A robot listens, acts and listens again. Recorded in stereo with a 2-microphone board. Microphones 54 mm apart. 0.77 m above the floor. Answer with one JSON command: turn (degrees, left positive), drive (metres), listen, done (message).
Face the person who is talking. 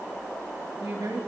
{"turn": -90}
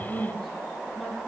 {"done": "Facing the woman speaking."}